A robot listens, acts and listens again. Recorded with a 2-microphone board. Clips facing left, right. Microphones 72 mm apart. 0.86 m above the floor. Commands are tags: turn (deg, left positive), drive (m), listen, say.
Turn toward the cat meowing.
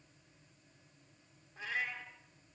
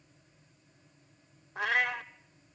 <turn deg="-70"/>
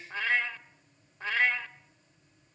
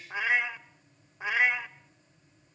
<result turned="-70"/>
<turn deg="-15"/>
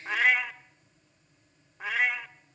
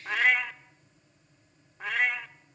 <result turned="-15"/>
<say>Facing the cat meowing.</say>